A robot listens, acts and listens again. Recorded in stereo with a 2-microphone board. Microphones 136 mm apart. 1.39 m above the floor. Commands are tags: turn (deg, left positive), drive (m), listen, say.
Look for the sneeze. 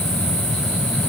<listen/>
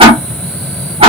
<listen/>
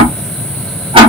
<say>I can't make out a sneeze to turn to.</say>